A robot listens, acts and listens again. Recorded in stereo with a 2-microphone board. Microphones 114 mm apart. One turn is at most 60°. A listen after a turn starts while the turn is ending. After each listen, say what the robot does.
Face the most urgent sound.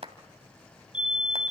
Turn 30° right.
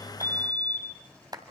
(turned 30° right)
Turn 60° right.
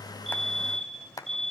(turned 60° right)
Turn 60° right.
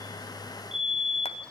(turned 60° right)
Facing the fire alarm.